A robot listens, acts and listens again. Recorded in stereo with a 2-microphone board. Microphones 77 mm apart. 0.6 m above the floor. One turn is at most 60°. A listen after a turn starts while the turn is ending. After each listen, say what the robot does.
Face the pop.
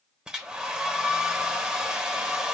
Keep listening.
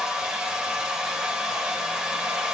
Keep listening.
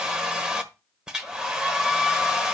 I can't make out a pop, only a hair dryer.